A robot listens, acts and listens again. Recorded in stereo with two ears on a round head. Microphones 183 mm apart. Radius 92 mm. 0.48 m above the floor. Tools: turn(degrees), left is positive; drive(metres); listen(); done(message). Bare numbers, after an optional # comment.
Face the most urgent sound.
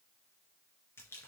listen()
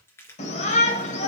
# The shout: about 35° left or 145° left.
turn(35)
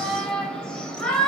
done("Found it: a shout, straight ahead.")